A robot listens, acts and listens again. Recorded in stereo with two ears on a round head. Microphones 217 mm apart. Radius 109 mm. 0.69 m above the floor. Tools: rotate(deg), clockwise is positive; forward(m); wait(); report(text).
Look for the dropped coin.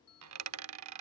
rotate(70)
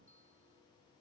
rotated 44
wait()
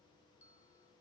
report("I heard a dropped coin, but can't make it out now. It was about 30° right or 65° right.")